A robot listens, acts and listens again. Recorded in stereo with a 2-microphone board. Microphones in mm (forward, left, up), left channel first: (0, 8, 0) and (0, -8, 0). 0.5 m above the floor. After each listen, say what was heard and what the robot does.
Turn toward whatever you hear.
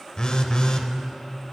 The phone buzzing: about 45° left or 135° left. Turn 45° left.
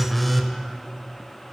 Facing the phone buzzing, under 1 m away.